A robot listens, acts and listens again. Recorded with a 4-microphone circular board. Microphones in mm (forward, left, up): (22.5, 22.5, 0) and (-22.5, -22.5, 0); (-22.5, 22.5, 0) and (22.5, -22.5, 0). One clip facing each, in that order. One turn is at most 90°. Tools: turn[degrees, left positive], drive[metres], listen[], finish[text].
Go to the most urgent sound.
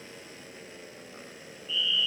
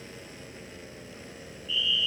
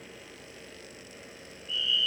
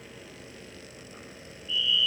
Thought: The fire alarm: 85° left.
Action: turn[85]
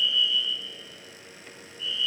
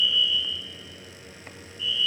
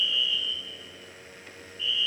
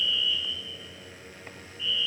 Action: drive[1.0]
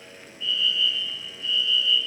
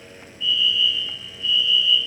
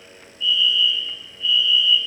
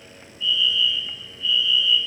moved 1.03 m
Action: drive[1.0]
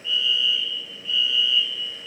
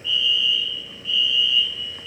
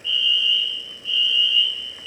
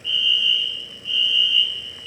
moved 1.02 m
Thought: The fire alarm is now 10° left.
Action: turn[10]
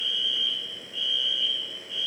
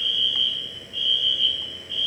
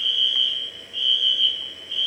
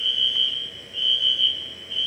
Action: drive[1.0]
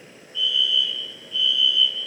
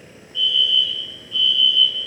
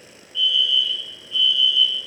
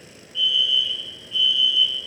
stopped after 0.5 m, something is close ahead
Action: finish[Arrived at the fire alarm, straight ahead.]